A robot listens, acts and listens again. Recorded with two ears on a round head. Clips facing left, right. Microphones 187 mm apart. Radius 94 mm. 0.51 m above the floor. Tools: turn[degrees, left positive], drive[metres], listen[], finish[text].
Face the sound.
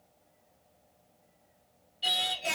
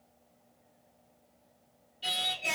Action: turn[30]
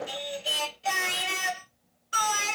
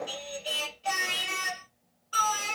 Thought: So it is at 150° left.
Action: turn[150]
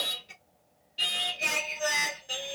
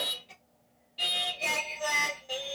Thought: The singing is now 10° left.
Action: turn[10]
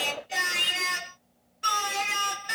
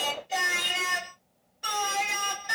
Action: finish[Facing the singing.]